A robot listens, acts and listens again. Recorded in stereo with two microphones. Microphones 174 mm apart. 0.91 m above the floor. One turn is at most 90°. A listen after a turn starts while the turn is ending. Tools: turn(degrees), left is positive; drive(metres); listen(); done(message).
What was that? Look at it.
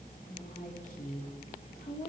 turn(degrees=50)
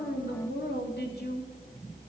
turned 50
turn(degrees=75)
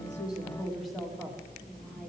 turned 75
done("Facing the woman speaking, 2 to 4 m away.")